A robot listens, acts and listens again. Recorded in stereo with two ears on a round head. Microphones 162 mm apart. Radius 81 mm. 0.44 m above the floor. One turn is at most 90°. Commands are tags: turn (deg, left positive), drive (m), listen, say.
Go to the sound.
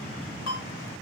<turn deg="65"/>
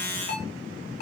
<turn deg="45"/>
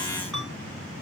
<drive m="1.0"/>
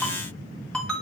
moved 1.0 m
<drive m="1.0"/>
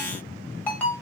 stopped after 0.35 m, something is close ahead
<turn deg="10"/>
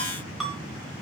<say>I am next to the ringtone.</say>